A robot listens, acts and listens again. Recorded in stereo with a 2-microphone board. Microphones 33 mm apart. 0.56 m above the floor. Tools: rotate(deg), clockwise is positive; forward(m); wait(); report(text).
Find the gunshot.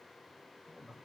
wait()
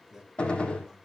rotate(-35)
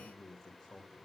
wait()
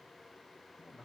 report("I heard a gunshot, but can't make it out now. It was about straight ahead or 110° left.")